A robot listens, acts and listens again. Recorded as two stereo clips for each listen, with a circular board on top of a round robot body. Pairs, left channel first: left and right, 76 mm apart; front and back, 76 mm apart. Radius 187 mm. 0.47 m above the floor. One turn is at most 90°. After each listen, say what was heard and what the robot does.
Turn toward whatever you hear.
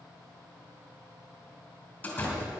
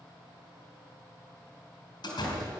The door slam: 20° left. Turn 20° left.
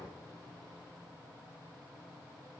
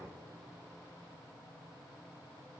Facing where the door slam came from. I can't hear it now.